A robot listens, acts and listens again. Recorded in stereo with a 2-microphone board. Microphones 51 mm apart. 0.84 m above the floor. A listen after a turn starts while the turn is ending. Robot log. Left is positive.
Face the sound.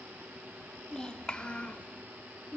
note: The child speaking: about 35° left or 145° left.
cmd yaw +35
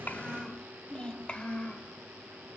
note: The child speaking: about 25° left or 155° left.
cmd yaw +25
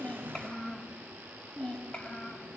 note: The child speaking: about 25° left or 155° left.
cmd yaw +25
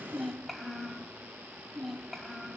end: Facing the child speaking, 2 to 4 m away.